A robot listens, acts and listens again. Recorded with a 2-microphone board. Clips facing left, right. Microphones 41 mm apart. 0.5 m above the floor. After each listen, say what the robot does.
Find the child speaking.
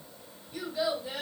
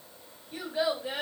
Turn 55° right.
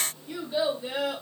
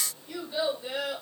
Found it: a child speaking, straight ahead.